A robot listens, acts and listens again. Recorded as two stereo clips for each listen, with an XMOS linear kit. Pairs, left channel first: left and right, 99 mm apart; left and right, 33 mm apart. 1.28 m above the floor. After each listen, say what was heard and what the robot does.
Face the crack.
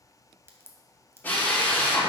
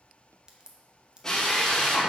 The crack: about 25° right or 155° right. Turn 25° right.
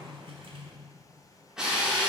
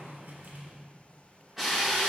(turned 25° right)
Keep listening.
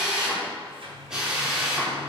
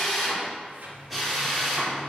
I heard a crack, but can't make it out now. It was about straight ahead or 130° right.